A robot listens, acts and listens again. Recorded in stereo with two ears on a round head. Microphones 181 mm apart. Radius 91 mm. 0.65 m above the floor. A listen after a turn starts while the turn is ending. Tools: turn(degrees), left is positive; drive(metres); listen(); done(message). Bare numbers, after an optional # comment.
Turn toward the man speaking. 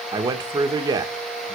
# The man speaking: about 20° right or 160° right.
turn(-20)
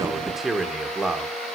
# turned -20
done("Found it: a man speaking, straight ahead, 1 to 2 m away.")